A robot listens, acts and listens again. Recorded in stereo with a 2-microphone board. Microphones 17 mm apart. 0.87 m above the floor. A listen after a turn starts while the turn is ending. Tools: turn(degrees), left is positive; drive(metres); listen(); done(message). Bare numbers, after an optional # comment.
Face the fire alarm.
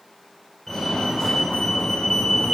# The fire alarm: about 25° left or 155° left.
turn(25)
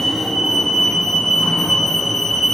done("Facing the fire alarm.")